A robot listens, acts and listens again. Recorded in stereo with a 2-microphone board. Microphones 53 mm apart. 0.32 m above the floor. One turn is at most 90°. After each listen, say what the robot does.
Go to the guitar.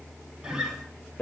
Turn 20° right.
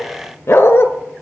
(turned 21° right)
Keep listening.
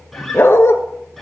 Drive 1.0 m forward.
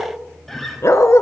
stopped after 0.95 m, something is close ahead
Arrived at the guitar, straight ahead.